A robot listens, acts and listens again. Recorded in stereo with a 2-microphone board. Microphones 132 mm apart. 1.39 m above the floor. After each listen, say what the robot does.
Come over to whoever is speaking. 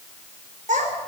Turn 90° right.
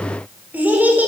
Turn 15° right.
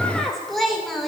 Drive 1.0 m forward.
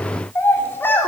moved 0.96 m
Turn 15° left.
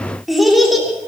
Drive 1.0 m forward.
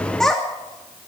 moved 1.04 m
Drive 1.0 m forward.
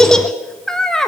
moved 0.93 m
Drive 1.0 m forward.
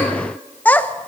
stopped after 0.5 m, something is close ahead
Turn 10° left.
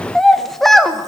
I am next to the child speaking.